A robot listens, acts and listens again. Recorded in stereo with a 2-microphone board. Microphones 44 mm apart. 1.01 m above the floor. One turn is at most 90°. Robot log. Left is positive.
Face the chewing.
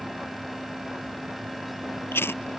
note: The chewing: about 55° left or 125° left.
cmd yaw +55
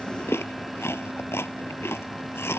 note: So it is at 70° left.
cmd yaw +70
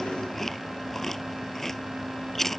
note: The chewing is now 10° left.
cmd yaw +10
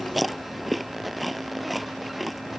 end: Facing the chewing.